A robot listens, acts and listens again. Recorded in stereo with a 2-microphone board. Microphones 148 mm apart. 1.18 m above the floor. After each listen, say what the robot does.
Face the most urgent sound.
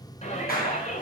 Turn 50° left.
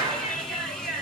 Found it: a shout, straight ahead.